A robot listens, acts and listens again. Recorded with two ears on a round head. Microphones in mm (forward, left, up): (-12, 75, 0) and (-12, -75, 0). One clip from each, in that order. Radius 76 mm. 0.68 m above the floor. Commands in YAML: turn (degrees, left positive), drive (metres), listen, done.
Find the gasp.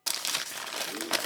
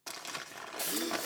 turn: -40
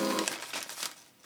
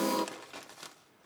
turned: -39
done: "Facing the gasp, under 1 m away."